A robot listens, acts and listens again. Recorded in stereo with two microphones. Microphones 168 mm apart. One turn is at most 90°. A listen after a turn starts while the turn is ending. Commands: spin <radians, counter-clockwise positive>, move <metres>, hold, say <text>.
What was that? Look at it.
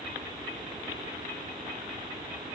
hold
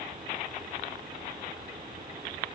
hold
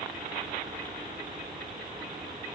say I can't make out anything.